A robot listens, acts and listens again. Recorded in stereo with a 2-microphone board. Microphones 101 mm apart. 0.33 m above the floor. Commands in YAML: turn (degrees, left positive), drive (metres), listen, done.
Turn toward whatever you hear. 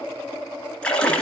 turn: 30
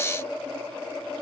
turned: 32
listen: true
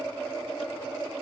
done: "I heard a splash, but can't make it out now. It was about 20° right or 140° left."